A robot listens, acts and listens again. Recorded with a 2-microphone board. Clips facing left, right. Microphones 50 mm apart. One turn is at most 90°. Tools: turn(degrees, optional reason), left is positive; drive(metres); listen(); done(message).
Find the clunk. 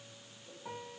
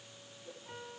listen()
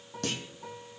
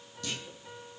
turn(degrees=55, reason="The clunk: about 55° left or 125° left.")
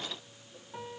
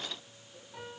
listen()
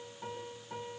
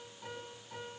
done("I heard a clunk, but can't make it out now. It was about straight ahead or 70° left.")